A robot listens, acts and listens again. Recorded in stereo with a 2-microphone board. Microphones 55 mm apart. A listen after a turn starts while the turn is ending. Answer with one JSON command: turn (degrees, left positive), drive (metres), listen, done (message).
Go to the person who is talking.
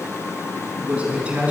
{"turn": -25}
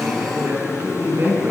{"turn": -130}
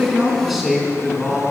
{"drive": 1.0}
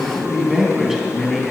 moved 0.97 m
{"drive": 1.0}
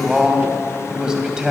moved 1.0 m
{"turn": -15}
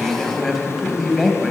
{"drive": 1.0}
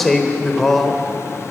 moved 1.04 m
{"drive": 1.0}
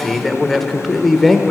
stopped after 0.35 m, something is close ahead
{"done": "Arrived at the man speaking, straight ahead."}